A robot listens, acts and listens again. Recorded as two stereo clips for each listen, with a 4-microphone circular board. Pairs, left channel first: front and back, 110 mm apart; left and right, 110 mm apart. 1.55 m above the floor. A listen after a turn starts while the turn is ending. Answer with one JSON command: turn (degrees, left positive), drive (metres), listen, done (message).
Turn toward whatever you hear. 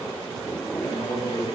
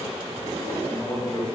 {"turn": 40}
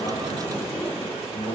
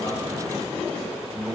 {"turn": 10}
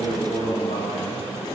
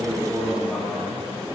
{"done": "Found it: a man speaking, straight ahead."}